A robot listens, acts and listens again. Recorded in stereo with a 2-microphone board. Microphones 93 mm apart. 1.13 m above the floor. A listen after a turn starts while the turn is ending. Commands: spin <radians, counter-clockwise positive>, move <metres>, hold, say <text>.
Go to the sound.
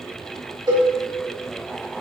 spin -0.87
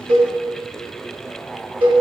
spin -1.31
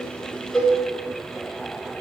move 1.0
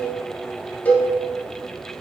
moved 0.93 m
spin 0.35
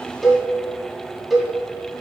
move 1.0
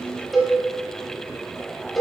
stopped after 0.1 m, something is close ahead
say I am next to the cowbell.